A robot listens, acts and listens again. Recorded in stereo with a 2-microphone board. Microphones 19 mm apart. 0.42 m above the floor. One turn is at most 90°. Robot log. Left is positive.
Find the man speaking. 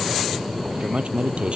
cmd yaw -90
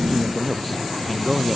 end: Facing the man speaking.